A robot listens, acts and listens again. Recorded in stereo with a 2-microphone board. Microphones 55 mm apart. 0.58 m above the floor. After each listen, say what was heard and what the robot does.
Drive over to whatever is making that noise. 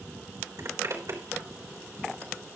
The zipper: about 70° right or 110° right. Turn 70° right.
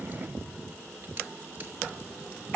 Keep listening.
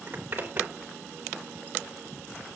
So it is at 30° right. Turn 30° right.
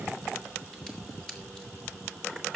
The zipper is now 10° left. Turn 10° left.
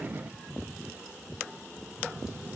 Keep listening.
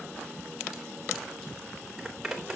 Drive 1.0 m forward.
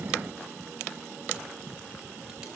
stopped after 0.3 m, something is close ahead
Keep listening.
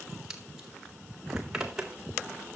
The zipper is now 10° right. Turn 10° right.
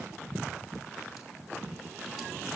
Keep listening.
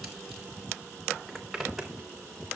Blocked. The zipper is further on, straight ahead.